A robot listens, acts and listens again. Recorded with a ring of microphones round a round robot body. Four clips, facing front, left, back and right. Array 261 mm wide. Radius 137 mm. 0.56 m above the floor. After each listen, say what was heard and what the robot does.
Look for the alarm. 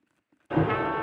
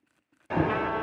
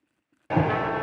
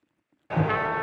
The alarm: 175° right. Turn 175° right.
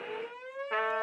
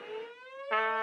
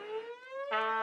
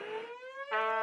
The alarm is now 10° right. Turn 10° right.
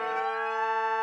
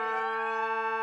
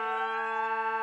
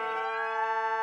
Facing the alarm.